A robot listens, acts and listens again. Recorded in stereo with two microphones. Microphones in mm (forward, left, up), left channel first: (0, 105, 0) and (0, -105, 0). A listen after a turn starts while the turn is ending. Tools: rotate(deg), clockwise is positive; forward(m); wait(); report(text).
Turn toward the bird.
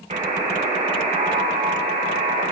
wait()
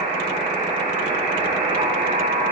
wait()
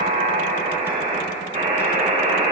report("I can't make out a bird to turn to.")